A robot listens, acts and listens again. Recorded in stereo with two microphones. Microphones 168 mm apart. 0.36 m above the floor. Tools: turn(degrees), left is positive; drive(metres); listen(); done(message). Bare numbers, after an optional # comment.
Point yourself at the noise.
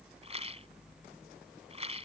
# The rattle: about 35° right or 145° right.
turn(-35)
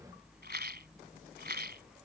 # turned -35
# So it is at 110° right.
turn(-110)
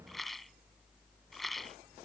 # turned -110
done("Found it: a rattle, straight ahead.")